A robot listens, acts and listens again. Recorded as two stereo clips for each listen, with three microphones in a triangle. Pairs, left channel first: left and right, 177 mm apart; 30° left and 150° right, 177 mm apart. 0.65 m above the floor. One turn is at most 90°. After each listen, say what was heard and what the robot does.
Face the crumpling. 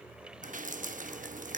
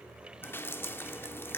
Keep listening.
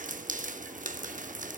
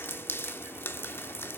Keep listening.
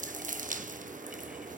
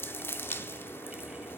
I can't make out crumpling to turn to.